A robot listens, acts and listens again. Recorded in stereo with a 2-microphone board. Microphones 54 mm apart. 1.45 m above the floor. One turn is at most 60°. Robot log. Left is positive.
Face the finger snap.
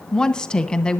cmd idle
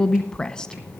cmd idle
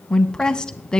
end: I can't make out a finger snap, only a woman speaking.